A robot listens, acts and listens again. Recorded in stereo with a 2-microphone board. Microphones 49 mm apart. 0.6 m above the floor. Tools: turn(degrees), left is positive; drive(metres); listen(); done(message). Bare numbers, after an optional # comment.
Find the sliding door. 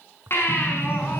# The sliding door: about 25° left or 155° left.
turn(25)
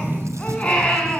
# So it is at 130° left.
turn(130)
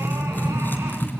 # The sliding door is now 10° left.
turn(10)
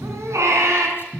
done("Found it: a sliding door, straight ahead, over 4 m away.")